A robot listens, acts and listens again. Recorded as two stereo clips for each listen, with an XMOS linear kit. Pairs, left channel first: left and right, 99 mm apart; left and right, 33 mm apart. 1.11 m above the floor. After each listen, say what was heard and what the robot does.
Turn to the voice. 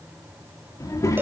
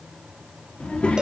The child speaking: about 30° left or 150° left. Turn 30° left.
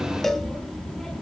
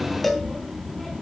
Found it: a child speaking, straight ahead.